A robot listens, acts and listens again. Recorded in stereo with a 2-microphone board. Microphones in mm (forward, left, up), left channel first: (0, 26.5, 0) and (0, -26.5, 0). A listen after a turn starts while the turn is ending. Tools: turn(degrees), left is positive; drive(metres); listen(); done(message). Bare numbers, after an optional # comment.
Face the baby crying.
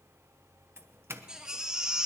turn(-30)
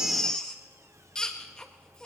# So it is at 15° left.
turn(15)
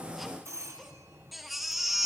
done("Found it: a baby crying, straight ahead.")